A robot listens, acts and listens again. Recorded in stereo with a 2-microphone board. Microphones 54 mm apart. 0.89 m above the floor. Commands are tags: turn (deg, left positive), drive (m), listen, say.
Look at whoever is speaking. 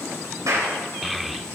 <turn deg="30"/>
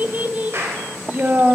<turn deg="-35"/>
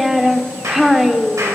<say>Facing the child speaking.</say>